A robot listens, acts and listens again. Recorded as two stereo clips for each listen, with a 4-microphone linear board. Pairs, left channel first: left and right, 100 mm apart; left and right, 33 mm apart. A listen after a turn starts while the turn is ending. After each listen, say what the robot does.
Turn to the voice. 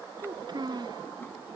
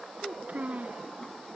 Turn 45° right.
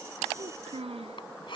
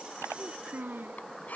Turn 90° right.
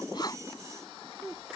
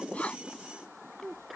Facing the child speaking.